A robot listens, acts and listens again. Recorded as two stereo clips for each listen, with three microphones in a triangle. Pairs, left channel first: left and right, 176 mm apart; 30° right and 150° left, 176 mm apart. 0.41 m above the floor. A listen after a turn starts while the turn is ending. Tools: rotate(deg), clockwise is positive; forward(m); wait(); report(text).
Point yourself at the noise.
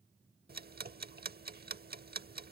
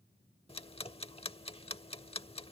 rotate(85)
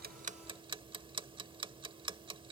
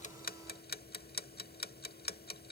rotate(30)
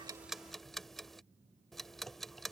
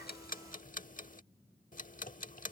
report("Found it: ticking, straight ahead.")